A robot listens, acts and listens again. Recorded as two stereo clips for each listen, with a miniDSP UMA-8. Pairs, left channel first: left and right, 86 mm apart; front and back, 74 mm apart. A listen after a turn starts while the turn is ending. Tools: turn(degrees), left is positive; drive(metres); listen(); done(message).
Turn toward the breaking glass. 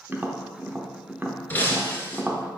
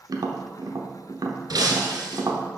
turn(degrees=160)
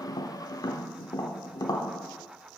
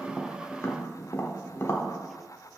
done("I heard breaking glass from this way, but can't make it out now.")